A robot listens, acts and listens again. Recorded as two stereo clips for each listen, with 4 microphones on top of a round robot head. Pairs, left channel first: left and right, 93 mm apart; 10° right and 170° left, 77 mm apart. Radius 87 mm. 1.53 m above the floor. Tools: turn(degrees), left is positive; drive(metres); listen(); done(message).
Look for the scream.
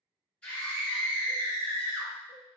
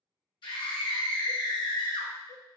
turn(degrees=10)
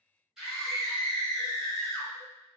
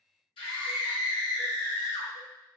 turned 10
done("Found it: a scream, straight ahead, under 1 m away.")